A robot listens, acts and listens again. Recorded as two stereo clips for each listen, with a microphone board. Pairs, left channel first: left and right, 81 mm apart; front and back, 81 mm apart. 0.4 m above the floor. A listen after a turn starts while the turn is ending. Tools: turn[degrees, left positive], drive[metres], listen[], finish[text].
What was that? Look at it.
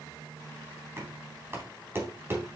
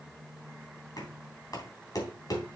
Thought: The knocking: 35° right.
Action: turn[-35]
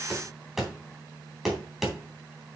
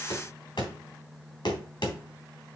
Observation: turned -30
Action: finish[Facing the knocking, 2 to 4 m away.]